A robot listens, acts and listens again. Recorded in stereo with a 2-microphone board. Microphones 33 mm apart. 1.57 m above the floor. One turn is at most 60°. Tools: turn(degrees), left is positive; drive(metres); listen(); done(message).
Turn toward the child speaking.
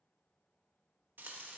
listen()
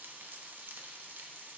listen()
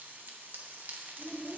turn(degrees=30)
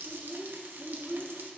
turn(degrees=-35)
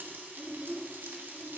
turn(degrees=-20)
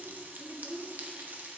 done("Facing the child speaking, 2 to 4 m away.")